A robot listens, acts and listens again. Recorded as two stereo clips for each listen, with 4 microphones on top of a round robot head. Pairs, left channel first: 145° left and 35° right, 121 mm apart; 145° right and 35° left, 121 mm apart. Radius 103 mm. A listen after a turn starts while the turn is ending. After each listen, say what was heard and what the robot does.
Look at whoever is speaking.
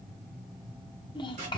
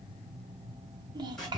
The child speaking: 90° left. Turn 90° left.
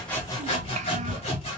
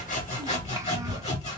Keep listening.
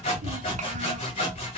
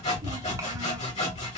Keep listening.
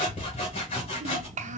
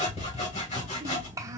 The child speaking is now 25° right. Turn 25° right.
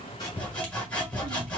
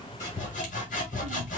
Keep listening.
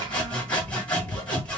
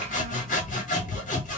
Keep listening.
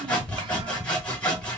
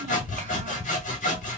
Facing where the child speaking came from. I can't hear it now.